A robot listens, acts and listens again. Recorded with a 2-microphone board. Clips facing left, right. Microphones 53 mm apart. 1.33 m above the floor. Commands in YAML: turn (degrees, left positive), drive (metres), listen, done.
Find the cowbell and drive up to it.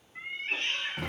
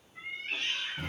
listen: true
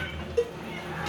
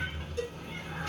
turn: 50
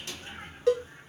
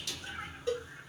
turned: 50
turn: 75
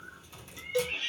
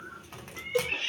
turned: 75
turn: -15
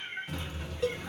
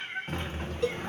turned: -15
drive: 1.0
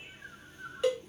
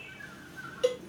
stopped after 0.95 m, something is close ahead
done: "I am next to the cowbell."